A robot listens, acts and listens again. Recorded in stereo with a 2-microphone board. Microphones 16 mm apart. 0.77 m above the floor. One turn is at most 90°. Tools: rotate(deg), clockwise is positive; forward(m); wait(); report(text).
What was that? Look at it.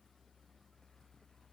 wait()
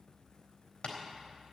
rotate(-65)
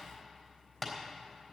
report("Facing the tapping, 2 to 4 m away.")